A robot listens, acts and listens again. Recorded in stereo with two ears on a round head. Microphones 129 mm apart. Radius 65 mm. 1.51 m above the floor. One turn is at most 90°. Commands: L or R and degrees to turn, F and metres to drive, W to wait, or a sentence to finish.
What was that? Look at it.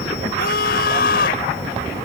L90
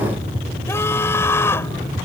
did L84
L15
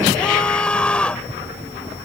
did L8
Found it: a scream, straight ahead.